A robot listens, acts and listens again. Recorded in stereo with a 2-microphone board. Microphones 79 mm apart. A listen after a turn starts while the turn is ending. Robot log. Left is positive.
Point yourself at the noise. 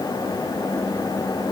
cmd idle
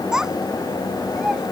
cmd yaw -30
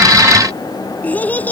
note: So it is at 20° left.
cmd yaw +20
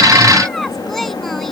end: Facing the child speaking.